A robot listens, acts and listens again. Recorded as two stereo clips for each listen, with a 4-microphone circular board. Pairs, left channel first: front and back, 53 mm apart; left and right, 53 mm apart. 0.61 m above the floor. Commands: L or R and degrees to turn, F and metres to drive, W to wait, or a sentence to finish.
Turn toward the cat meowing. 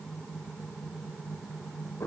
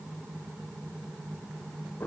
W
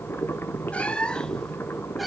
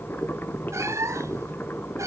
R90
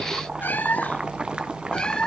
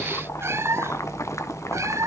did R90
R75
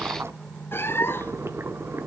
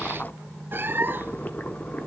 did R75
R40
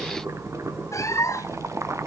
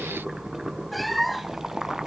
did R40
Facing the cat meowing, 2 to 4 m away.